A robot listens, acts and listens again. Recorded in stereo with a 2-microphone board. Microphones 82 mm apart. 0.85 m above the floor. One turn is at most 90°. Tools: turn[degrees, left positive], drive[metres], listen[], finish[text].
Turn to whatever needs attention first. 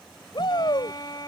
Thought: The shout: about 70° left or 110° left.
Action: turn[70]
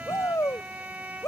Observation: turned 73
Thought: So it is at 40° left.
Action: turn[40]
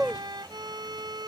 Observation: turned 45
Action: finish[Found it: a shout, straight ahead.]